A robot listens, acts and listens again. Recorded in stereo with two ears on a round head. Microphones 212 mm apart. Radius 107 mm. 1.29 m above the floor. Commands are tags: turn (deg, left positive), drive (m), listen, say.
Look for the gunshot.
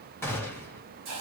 <turn deg="30"/>
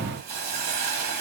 <listen/>
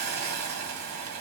<say>I heard a gunshot, but can't make it out now. It was about 20° right or 140° left.</say>